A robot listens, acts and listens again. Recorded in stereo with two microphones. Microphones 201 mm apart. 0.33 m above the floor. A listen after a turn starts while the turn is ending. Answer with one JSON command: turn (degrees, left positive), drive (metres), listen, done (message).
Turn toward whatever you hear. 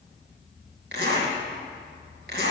{"turn": -65}
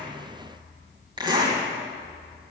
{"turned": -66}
{"turn": -25}
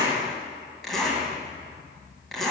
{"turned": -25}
{"done": "Found it: a zipper, straight ahead, 2 to 4 m away."}